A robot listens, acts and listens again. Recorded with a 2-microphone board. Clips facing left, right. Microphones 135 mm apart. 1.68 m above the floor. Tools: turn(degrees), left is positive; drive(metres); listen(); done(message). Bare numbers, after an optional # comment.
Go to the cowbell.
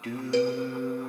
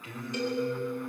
# The cowbell: about 70° left or 110° left.
turn(70)
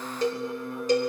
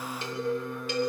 # So it is at 35° left.
turn(35)
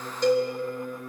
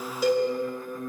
drive(1.0)
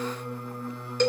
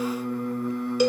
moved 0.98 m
# The cowbell is now 10° right.
turn(-10)
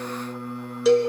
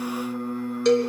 drive(1.0)
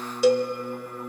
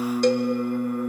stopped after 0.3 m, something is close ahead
done("I am next to the cowbell.")